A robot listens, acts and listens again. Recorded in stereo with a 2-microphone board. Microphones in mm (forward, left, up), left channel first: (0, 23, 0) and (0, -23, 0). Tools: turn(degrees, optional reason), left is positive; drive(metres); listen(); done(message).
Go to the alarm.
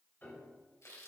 listen()
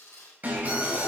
turn(degrees=-35, reason="The alarm: about 35° right or 145° right.")
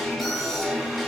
drive(metres=1.0)
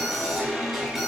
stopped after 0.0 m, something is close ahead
turn(degrees=-10, reason="The alarm is now 10° right.")
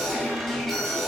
done("Something is in my way. I am facing the alarm but have not reached it.")